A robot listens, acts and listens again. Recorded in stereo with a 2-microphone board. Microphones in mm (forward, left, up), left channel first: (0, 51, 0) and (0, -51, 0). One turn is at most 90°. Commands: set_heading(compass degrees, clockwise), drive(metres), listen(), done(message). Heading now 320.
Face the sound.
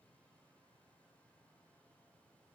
listen()
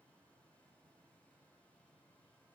listen()
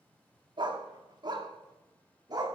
set_heading(0)
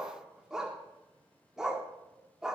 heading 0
done("Facing the dog barking, 1 to 2 m away.")